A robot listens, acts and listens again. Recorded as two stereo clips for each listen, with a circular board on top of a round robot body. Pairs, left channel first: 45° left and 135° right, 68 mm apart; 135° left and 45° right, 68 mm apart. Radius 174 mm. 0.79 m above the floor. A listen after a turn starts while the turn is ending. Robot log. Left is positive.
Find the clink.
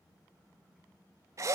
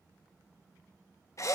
cmd idle
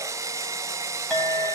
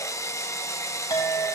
note: The clink: 125° left.
cmd yaw +125
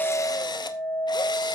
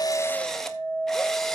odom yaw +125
end: Facing the clink, 2 to 4 m away.